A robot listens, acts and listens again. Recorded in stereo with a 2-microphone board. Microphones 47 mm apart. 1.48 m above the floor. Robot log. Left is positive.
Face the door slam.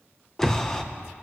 cmd yaw +30
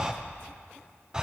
cmd idle
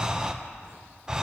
end: I heard a door slam, but can't make it out now. It was about 20° right or 140° left.